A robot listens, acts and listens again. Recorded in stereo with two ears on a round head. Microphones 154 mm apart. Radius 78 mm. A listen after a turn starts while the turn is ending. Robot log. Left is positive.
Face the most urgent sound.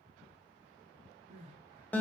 note: The crying: about 40° right or 140° right.
cmd yaw -40
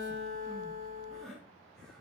end: Facing the crying, 1 to 2 m away.